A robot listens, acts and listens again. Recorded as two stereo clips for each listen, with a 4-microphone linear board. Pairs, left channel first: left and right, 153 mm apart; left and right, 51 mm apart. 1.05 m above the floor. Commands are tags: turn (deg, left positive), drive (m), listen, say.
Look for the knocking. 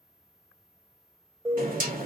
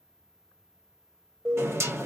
<turn deg="-60"/>
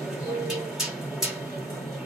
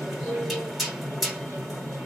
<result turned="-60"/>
<say>Facing the knocking.</say>